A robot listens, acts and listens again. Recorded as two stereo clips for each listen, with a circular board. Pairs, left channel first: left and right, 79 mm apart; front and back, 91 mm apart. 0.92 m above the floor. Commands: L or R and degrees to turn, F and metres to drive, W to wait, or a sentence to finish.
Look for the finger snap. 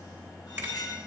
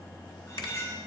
R25
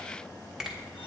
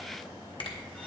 Found it: a finger snap, straight ahead, 1 to 2 m away.